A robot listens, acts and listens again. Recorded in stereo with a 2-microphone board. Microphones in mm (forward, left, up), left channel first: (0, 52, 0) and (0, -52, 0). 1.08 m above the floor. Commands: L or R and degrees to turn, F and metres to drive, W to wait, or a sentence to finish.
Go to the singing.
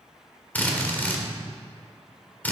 W
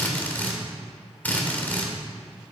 W
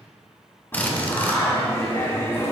L25
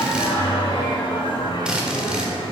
L130
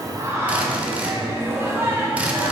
R25
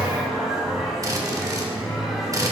F1.0
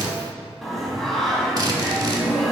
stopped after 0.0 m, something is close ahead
Something is in my way. I am facing the singing but have not reached it.